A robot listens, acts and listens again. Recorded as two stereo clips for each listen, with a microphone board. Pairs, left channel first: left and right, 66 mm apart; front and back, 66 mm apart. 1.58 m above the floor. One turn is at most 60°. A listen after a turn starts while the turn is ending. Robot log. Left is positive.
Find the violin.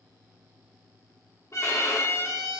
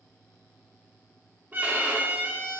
note: The violin: 125° left.
cmd yaw +60
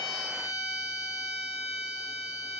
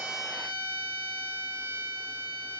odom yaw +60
note: The violin is now 65° left.
cmd yaw +60
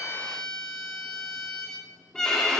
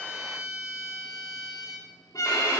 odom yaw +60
note: The violin is now 10° left.
cmd yaw +10
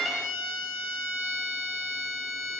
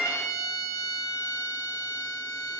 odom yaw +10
end: Found it: a violin, straight ahead, 2 to 4 m away.